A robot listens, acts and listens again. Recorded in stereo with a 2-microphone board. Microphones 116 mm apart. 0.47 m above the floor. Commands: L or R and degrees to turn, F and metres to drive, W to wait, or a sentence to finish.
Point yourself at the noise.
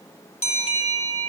L90
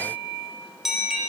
Facing the bell.